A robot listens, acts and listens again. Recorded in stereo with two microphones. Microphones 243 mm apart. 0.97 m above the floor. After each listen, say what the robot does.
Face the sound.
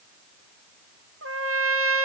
Turn 65° right.
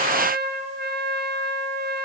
Turn 45° right.
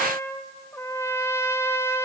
Turn 10° left.
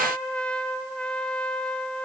Facing the trumpet.